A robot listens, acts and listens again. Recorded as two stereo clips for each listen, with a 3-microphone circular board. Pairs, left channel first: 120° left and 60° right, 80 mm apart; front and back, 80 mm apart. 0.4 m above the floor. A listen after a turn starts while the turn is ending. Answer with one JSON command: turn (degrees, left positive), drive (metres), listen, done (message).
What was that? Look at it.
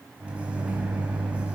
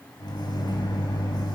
{"turn": 15}
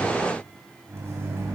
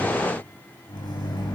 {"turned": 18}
{"done": "Found it: a microwave, straight ahead."}